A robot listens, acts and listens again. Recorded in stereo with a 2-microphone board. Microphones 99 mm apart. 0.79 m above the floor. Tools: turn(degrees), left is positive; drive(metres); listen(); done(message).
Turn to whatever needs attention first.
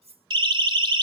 turn(degrees=-55)
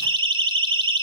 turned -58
turn(degrees=-65)
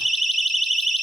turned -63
done("Facing the siren, 2 to 4 m away.")